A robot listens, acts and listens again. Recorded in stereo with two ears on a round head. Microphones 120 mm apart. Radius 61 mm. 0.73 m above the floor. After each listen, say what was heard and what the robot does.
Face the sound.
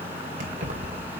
The keys jangling: about 65° right or 115° right. Turn 65° right.
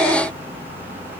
Keep listening.
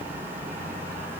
Keep listening.
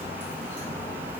I heard keys jangling, but can't make it out now. It was about straight ahead or 50° right.